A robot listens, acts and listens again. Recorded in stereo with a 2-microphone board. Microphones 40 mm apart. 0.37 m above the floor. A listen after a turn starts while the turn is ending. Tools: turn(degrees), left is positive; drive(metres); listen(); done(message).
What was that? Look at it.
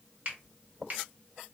turn(degrees=-40)
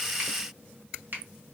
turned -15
turn(degrees=-130)
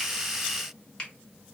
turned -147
turn(degrees=30)
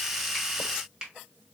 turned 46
turn(degrees=-15)
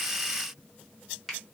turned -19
done("Facing the finger snap, 1 to 2 m away.")